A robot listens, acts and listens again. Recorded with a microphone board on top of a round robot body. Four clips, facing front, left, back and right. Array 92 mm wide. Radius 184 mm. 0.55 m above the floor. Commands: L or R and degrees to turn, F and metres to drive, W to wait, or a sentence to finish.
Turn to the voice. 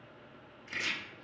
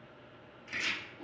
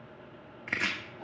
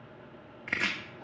W
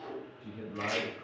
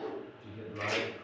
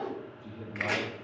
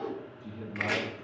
L35
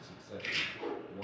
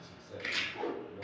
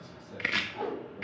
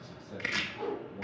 Found it: a man speaking, straight ahead, 2 to 4 m away.